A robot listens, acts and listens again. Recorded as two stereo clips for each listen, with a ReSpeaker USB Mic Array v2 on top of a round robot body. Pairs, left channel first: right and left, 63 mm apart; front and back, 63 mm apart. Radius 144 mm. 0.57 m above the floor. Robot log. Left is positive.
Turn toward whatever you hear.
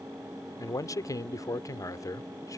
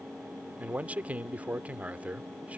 note: The man speaking: 115° right.
cmd yaw -115
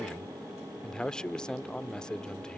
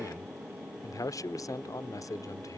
note: The man speaking is now 15° right.
cmd yaw -15
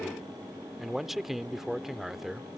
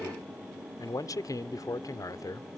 end: Found it: a man speaking, straight ahead.